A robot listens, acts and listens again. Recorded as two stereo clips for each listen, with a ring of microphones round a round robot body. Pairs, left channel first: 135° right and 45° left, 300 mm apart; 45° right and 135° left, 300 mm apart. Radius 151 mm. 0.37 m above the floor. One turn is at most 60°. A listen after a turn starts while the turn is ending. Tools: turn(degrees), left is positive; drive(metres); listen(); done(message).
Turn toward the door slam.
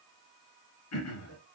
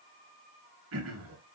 listen()
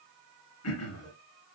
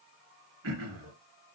listen()
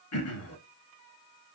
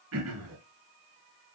done("I can't make out a door slam to turn to.")